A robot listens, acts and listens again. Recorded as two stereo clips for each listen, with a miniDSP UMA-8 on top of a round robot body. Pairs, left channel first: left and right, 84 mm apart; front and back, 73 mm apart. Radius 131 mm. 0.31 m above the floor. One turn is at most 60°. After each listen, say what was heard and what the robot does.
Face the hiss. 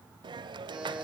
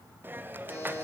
The hiss: 115° right. Turn 60° right.
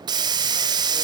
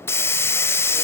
The hiss is now 55° right. Turn 55° right.
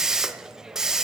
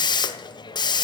Found it: a hiss, straight ahead.